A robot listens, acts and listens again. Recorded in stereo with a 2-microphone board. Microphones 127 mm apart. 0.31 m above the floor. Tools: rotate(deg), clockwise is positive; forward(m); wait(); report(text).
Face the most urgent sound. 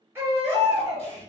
rotate(20)
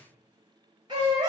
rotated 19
rotate(145)
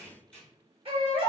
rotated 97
rotate(45)
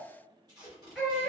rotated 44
report("Found it: a baby crying, straight ahead.")